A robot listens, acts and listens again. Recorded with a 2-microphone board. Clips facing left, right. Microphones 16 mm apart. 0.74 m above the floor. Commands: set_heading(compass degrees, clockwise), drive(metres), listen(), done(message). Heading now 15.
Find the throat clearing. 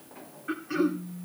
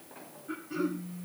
set_heading(320)
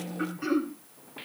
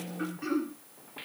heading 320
set_heading(310)
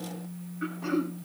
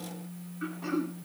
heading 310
done("Facing the throat clearing.")